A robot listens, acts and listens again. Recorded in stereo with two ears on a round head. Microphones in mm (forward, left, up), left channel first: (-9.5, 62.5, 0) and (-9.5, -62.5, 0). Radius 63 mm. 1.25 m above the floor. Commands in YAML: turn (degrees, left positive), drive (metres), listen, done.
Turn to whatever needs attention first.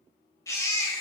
turn: 20
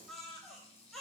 done: "Facing the baby crying, 2 to 4 m away."